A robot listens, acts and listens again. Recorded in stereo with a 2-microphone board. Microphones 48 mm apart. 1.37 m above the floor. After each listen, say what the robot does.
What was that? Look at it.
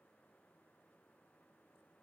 Keep listening.
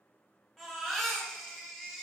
Turn 30° left.
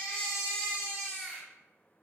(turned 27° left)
Turn 150° left.
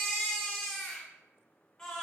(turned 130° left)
Turn 20° left.
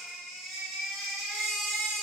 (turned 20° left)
Found it: a baby crying, straight ahead.